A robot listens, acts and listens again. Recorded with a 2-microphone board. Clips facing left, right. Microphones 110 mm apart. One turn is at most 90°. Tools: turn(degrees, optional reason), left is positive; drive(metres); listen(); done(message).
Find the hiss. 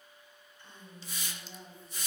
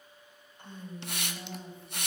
turn(degrees=-70, reason="The hiss: about 70° right or 110° right.")
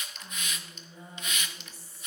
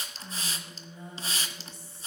turn(degrees=-35, reason="So it is at 35° right.")
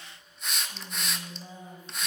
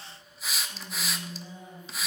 done("Found it: a hiss, straight ahead, 1 to 2 m away.")